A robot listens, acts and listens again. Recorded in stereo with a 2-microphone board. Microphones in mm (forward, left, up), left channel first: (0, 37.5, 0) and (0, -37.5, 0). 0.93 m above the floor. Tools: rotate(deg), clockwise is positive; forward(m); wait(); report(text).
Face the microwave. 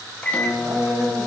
rotate(-20)
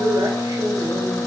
rotate(-140)
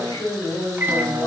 rotate(30)
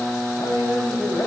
report("Facing the microwave, under 1 m away.")